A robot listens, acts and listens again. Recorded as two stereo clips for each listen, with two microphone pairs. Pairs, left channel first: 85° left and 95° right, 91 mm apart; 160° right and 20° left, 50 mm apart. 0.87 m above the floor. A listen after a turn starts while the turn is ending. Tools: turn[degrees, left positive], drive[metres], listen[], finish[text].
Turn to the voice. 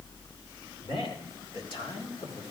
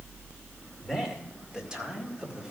Thought: The man speaking: 90° left.
Action: turn[90]
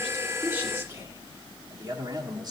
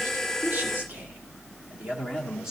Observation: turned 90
Thought: The man speaking is now 55° right.
Action: turn[-55]
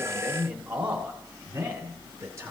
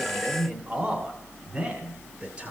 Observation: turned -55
Thought: The man speaking is now 30° right.
Action: turn[-30]
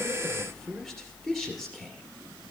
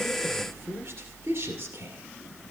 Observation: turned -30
Action: finish[Facing the man speaking.]